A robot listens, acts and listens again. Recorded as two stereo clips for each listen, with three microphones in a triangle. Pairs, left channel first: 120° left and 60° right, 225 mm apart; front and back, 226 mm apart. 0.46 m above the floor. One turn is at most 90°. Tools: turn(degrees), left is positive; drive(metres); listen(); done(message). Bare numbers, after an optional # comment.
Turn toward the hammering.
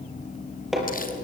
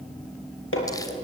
# The hammering: 30° left.
turn(30)
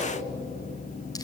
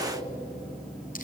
done("Found it: hammering, straight ahead, over 4 m away.")